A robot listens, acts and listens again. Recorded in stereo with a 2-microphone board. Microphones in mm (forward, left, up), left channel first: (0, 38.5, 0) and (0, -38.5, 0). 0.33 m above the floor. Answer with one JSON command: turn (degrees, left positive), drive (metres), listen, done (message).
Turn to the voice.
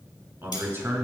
{"turn": -30}
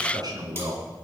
{"turn": -120}
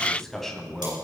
{"done": "Facing the man speaking, 2 to 4 m away."}